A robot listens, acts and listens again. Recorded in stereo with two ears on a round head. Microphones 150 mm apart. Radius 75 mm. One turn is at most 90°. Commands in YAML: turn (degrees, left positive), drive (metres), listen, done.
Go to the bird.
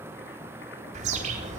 turn: -45
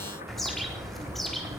drive: 1.0
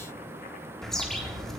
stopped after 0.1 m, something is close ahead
done: "Something is in my way. I am facing the bird but have not reached it."